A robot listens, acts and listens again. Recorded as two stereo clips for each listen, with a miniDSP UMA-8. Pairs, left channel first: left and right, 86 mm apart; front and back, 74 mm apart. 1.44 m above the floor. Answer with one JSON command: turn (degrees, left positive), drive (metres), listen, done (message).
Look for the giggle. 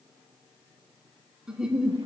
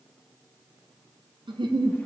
{"turn": -170}
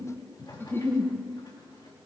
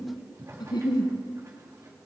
{"turn": 25}
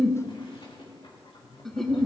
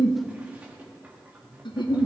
{"done": "Facing the giggle."}